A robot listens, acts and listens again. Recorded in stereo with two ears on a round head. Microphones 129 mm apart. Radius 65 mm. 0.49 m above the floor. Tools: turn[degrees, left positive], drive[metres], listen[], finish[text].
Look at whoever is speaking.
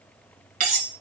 Action: listen[]
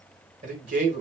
Thought: The man speaking: about 65° right or 115° right.
Action: turn[-65]
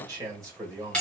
Thought: So it is at 30° right.
Action: turn[-30]
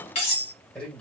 Thought: The man speaking is now 10° left.
Action: turn[10]
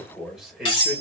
Action: finish[Facing the man speaking, 1 to 2 m away.]